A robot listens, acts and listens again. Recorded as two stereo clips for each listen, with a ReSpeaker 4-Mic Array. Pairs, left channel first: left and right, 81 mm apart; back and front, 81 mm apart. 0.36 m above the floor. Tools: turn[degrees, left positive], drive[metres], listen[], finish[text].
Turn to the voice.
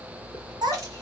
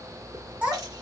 Thought: The child speaking: 75° right.
Action: turn[-75]
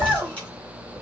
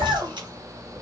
Thought: The child speaking is now 15° right.
Action: turn[-15]
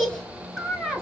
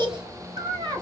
Action: finish[Facing the child speaking, 1 to 2 m away.]